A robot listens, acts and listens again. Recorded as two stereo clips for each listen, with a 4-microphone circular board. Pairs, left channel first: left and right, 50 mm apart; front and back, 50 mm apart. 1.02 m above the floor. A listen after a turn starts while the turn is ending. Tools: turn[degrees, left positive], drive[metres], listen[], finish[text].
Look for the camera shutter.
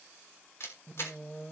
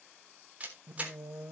Thought: The camera shutter: 120° left.
Action: turn[120]
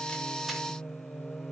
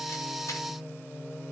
Action: listen[]
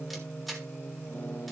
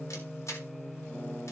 Action: finish[Facing the camera shutter.]